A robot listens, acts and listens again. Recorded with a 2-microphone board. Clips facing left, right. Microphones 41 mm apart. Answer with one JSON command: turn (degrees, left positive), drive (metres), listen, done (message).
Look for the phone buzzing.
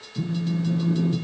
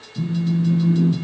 {"turn": 15}
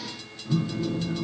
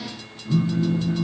{"done": "Found it: a phone buzzing, straight ahead, under 1 m away."}